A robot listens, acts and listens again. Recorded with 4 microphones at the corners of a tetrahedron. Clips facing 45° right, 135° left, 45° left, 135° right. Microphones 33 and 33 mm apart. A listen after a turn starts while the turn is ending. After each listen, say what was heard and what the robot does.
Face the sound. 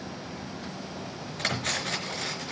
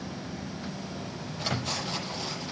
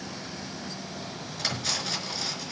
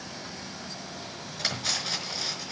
The cutlery clinking: 55° right. Turn 55° right.
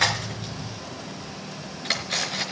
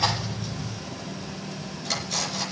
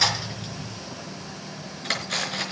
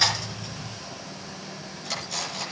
Found it: cutlery clinking, straight ahead.